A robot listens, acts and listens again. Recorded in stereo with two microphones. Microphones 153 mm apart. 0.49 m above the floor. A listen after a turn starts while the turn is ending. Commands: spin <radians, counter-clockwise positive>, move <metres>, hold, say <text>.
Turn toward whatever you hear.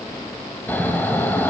spin 0.52
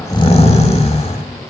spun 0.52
spin 2.44
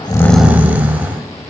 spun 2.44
spin -0.17
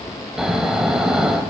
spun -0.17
say Found it: snoring, straight ahead, under 1 m away.